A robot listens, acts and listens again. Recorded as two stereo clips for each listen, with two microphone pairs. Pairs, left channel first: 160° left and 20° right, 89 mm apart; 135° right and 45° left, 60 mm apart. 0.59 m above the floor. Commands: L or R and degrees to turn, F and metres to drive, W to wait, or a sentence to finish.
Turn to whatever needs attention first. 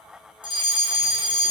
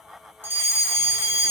Found it: a fire alarm, straight ahead, over 4 m away.